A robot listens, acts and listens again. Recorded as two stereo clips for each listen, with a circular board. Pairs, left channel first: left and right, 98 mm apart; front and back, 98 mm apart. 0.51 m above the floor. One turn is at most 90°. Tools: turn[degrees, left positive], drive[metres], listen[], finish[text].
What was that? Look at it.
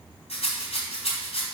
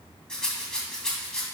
Thought: The rattle: 85° left.
Action: turn[85]
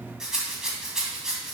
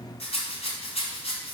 Action: finish[Found it: a rattle, straight ahead.]